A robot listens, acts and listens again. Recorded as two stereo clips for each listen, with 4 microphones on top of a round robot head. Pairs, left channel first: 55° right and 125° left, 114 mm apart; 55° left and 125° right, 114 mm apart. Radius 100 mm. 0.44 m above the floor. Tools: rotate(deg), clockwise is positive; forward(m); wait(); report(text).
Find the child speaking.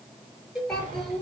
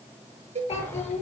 rotate(-30)
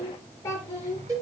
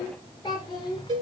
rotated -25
report("Facing the child speaking, over 4 m away.")